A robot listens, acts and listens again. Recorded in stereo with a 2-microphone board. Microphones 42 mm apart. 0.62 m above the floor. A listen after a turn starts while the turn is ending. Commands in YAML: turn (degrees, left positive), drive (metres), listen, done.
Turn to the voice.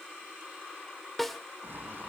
listen: true
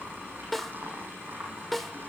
listen: true
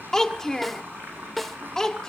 turn: 30
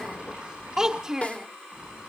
turn: -15
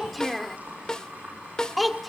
done: "Found it: a child speaking, straight ahead."